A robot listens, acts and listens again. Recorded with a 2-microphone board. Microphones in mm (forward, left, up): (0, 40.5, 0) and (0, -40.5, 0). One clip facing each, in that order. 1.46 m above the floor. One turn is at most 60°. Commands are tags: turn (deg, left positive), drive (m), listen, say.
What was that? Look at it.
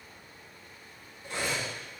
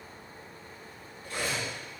<turn deg="25"/>
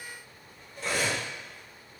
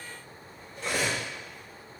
<say>Found it: cutlery clinking, straight ahead, 1 to 2 m away.</say>